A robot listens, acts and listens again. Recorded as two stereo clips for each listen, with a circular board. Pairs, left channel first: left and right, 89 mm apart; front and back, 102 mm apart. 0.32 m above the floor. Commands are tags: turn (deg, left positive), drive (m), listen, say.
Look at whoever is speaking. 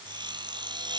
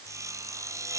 <listen/>
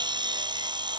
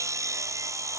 <listen/>
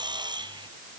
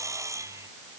<say>I can't make out anyone speaking, only sawing.</say>